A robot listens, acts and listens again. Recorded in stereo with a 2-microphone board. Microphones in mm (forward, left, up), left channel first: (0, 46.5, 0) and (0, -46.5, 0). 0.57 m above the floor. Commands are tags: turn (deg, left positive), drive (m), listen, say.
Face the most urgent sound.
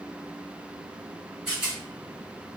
<listen/>
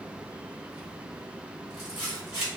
<listen/>
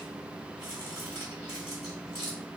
<say>I can't make out anything urgent, only a rattle.</say>